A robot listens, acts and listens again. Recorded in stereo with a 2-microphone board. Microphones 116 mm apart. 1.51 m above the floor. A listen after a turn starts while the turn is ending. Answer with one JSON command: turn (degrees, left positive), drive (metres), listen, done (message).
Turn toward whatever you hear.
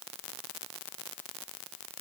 {"listen": true}
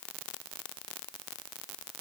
{"listen": true}
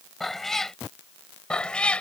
{"turn": 30}
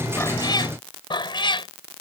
{"turn": 130}
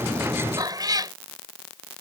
{"turn": -35}
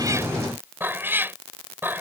{"turn": -20}
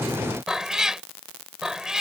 {"done": "Facing the cat meowing."}